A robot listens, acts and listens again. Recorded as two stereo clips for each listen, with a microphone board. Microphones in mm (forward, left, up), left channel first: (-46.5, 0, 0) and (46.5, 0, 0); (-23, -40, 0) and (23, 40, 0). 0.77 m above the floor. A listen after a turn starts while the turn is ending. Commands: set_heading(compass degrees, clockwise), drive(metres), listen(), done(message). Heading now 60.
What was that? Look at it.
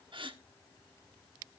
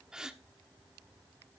set_heading(85)
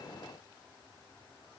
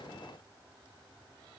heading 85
done("Facing where the gasp came from. I can't hear it now.")